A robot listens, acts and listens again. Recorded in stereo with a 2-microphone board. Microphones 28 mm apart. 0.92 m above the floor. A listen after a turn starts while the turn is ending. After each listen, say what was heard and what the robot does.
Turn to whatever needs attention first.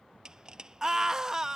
The scream: about 25° right or 155° right. Turn 25° right.
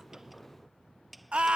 So it is at 130° right. Turn 130° right.
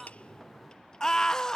The scream is now 25° left. Turn 25° left.
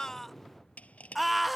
Found it: a scream, straight ahead.